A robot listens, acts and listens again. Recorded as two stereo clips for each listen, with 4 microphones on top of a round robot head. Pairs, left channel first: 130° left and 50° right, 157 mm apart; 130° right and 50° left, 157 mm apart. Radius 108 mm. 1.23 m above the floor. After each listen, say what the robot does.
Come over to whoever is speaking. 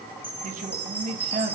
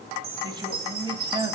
Turn 10° right.
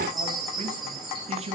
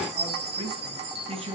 Drive 1.0 m forward.
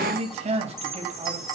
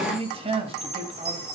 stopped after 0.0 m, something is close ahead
Blocked. The man speaking is further on, straight ahead.